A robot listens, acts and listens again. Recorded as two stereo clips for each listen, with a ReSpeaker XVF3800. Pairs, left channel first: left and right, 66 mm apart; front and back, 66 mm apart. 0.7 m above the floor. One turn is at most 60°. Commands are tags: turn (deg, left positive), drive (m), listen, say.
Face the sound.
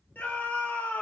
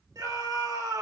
<turn deg="60"/>
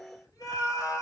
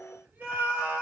<turn deg="60"/>
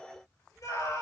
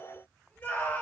<turn deg="60"/>
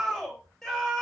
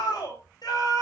<turn deg="10"/>
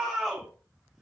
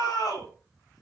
<say>Found it: a scream, straight ahead.</say>